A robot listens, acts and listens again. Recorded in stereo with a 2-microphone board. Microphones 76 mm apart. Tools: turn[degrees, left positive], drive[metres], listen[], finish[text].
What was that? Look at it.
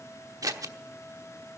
Thought: The scissors: about 50° right or 130° right.
Action: turn[-50]
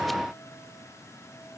Action: listen[]
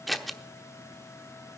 Action: finish[Facing the scissors.]